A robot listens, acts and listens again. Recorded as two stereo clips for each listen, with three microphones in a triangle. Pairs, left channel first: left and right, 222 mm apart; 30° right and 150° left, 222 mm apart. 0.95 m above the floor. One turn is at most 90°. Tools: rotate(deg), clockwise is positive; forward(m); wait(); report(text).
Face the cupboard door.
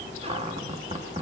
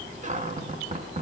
rotate(90)
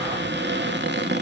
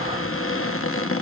rotate(50)
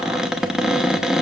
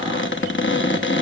report("Facing the cupboard door.")